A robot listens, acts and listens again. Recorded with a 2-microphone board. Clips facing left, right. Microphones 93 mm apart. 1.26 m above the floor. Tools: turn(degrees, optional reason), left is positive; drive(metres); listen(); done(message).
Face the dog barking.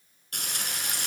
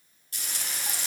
listen()
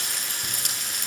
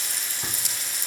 listen()
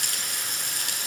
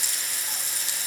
done("I can't make out a dog barking to turn to.")